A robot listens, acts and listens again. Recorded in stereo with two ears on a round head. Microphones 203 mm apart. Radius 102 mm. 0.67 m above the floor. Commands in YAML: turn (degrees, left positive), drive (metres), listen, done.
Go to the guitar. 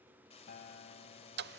turn: 40
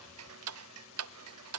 listen: true
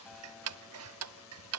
listen: true
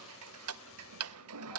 done: "I heard a guitar, but can't make it out now. It was about straight ahead or 100° left. I did not reach it."